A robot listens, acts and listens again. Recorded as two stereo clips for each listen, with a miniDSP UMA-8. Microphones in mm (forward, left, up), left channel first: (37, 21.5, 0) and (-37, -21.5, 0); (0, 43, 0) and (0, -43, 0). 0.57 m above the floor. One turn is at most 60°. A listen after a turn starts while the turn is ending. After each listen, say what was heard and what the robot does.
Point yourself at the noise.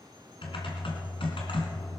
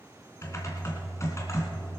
The typing on a keyboard: 35° left. Turn 35° left.
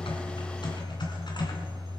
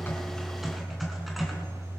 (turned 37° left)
Found it: typing on a keyboard, straight ahead, 2 to 4 m away.